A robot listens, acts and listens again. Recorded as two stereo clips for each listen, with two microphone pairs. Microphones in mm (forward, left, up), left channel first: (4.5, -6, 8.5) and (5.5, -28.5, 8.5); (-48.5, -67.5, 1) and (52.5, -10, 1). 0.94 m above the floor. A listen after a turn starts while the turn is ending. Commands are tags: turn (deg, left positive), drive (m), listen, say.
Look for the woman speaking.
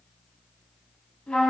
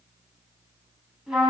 <listen/>
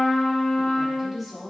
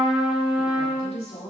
<turn deg="-175"/>
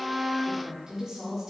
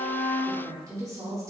<turn deg="-35"/>
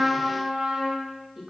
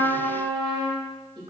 <turn deg="-15"/>
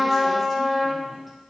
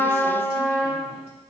<listen/>
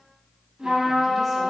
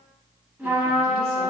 <listen/>
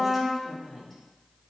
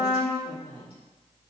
<say>Found it: a woman speaking, straight ahead.</say>